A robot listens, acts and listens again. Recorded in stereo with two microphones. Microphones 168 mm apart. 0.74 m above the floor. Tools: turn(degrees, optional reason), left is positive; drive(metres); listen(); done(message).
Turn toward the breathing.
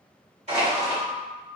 listen()
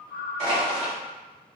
listen()
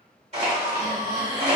turn(degrees=-25, reason="The breathing: about 25° right or 155° right.")
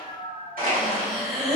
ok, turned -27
done("Found it: breathing, straight ahead, 1 to 2 m away.")